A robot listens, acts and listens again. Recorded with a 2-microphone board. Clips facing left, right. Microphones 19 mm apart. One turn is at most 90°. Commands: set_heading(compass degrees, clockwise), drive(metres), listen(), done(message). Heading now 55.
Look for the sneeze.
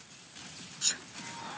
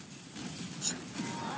set_heading(30)
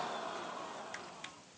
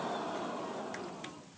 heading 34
listen()
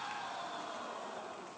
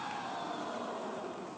done("I heard a sneeze, but can't make it out now. It was about straight ahead or 135° left.")